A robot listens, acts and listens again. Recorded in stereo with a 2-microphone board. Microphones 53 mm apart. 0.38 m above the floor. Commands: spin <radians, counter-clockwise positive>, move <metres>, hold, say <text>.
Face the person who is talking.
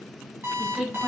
spin -0.35
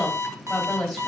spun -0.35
say Found it: a woman speaking, straight ahead, 1 to 2 m away.